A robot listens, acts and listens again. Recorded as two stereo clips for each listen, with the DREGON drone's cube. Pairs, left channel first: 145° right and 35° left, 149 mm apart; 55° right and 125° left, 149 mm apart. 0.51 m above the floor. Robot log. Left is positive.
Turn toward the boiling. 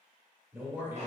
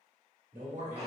cmd idle
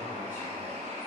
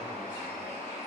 cmd idle
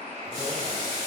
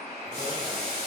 note: The boiling: 95° right.
cmd yaw -95
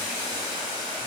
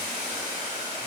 note: The boiling is now 20° right.
cmd yaw -20
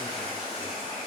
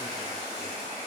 cmd idle
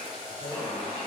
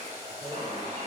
note: The boiling is now 10° right.
cmd yaw -10
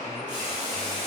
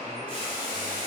end: Found it: boiling, straight ahead.